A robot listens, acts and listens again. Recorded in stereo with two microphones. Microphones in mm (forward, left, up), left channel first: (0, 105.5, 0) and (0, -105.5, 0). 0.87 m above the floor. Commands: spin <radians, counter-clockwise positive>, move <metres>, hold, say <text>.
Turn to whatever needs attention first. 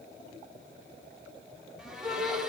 spin -0.52
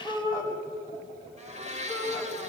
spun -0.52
spin 0.35
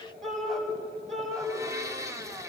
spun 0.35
say Found it: a shout, straight ahead, over 4 m away.